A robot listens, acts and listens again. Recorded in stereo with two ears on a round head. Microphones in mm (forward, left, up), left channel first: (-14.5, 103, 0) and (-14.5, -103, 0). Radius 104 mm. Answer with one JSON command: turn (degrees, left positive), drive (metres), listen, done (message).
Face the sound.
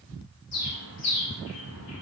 {"turn": 90}
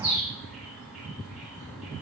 {"done": "Found it: a bird, straight ahead, 2 to 4 m away."}